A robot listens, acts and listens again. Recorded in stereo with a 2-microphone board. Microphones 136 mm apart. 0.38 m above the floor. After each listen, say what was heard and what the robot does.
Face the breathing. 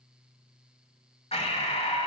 The breathing: about 55° left or 125° left. Turn 55° left.
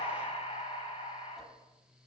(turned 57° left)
So it is at 60° left. Turn 60° left.
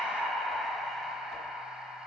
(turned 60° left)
Facing the breathing.